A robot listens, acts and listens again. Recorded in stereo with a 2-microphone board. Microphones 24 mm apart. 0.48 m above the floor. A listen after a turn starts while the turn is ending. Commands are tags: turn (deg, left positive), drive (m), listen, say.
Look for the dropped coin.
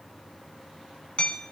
<listen/>
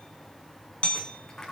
<turn deg="15"/>
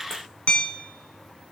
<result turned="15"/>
<listen/>
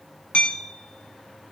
<say>I heard a dropped coin, but can't make it out now. It was about straight ahead or 150° left.</say>